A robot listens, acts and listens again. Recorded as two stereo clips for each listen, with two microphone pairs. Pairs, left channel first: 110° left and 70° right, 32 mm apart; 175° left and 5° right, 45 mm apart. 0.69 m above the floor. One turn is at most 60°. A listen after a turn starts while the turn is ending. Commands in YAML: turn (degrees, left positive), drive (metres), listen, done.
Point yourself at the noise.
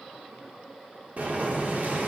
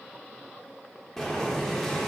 turn: -60
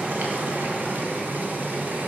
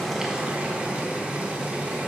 turn: -60
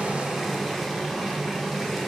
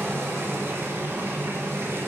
turn: 15
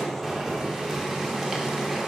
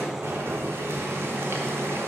done: "Found it: boiling, straight ahead, 1 to 2 m away."